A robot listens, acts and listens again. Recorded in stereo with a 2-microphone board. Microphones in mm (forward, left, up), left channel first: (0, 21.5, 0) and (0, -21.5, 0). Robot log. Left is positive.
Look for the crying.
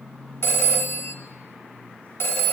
cmd idle
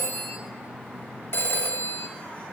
cmd idle
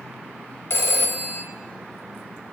end: I can't make out crying to turn to.